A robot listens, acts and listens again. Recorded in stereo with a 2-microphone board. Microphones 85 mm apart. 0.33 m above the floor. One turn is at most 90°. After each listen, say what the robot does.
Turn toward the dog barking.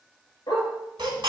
Turn 60° left.
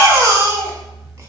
Keep listening.
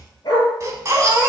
Turn 55° left.
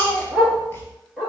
Turn 15° right.
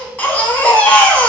Keep listening.
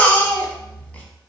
Keep listening.
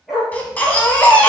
Facing the dog barking.